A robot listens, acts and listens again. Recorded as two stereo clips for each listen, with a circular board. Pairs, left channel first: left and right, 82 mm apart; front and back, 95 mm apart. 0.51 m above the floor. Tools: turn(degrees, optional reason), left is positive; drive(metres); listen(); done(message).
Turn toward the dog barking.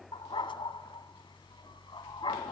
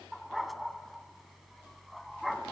turn(degrees=90, reason="The dog barking: 90° left.")
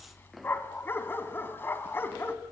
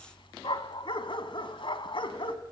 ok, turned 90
turn(degrees=25, reason="The dog barking is now 25° left.")
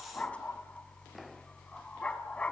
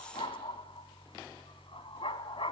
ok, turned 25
turn(degrees=15, reason="The dog barking is now 15° left.")
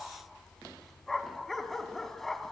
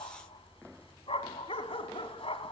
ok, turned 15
done("Found it: a dog barking, straight ahead.")